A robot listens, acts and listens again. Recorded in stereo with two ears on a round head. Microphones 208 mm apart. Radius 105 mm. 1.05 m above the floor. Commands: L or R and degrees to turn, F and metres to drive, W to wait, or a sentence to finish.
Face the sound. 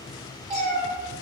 R30
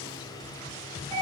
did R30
R25
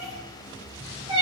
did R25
R25
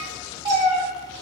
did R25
R25
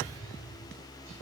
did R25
W
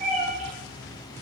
R35
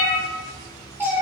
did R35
R10
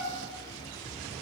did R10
W
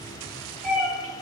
Facing the cat meowing, 1 to 2 m away.